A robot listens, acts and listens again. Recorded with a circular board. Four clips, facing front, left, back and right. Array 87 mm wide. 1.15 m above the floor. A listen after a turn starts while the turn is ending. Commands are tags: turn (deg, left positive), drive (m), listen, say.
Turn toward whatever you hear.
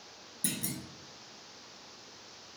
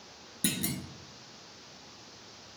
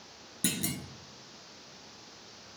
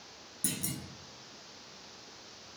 <turn deg="145"/>
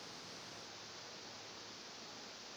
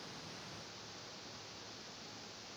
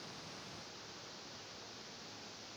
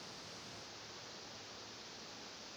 <say>I heard a clunk from this way, but can't make it out now.</say>